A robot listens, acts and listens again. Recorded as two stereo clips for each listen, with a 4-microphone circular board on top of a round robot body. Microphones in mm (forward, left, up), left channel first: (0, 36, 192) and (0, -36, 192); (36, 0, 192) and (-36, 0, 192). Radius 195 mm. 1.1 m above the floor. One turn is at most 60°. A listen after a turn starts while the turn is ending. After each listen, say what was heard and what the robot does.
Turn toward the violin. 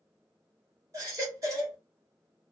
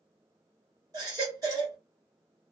Keep listening.
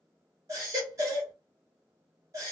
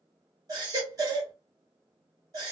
Keep listening.
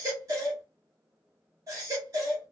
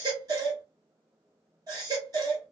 I can't make out a violin to turn to.